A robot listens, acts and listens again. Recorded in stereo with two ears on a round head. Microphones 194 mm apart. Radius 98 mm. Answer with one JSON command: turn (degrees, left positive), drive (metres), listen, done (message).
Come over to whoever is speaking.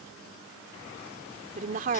{"turn": -40}
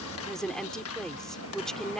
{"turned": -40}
{"drive": 1.0}
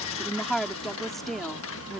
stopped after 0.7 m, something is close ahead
{"done": "Something is in my way. I am facing the woman speaking but have not reached it."}